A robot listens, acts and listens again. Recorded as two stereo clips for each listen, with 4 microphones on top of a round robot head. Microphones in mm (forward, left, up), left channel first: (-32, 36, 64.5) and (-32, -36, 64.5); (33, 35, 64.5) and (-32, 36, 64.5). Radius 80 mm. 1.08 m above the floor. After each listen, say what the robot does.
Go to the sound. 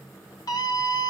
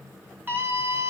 Turn 120° left.
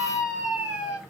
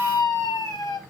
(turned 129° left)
Drive 1.0 m forward.
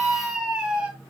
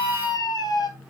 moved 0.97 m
Turn 10° right.
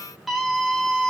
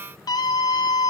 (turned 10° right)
Drive 1.0 m forward.
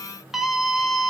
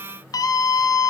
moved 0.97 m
Drive 1.0 m forward.
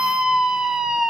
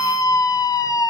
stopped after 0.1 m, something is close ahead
I am next to the scream.